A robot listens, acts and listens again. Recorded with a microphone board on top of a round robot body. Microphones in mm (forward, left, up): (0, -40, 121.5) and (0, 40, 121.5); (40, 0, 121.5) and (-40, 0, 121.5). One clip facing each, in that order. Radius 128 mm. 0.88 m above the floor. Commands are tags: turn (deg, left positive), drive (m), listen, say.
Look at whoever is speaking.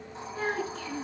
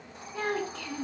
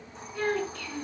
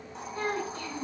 <turn deg="125"/>
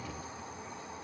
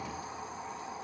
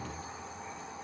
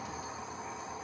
<listen/>
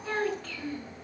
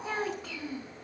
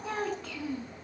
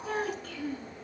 <turn deg="15"/>
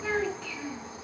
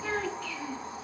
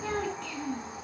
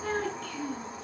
<say>Facing the child speaking.</say>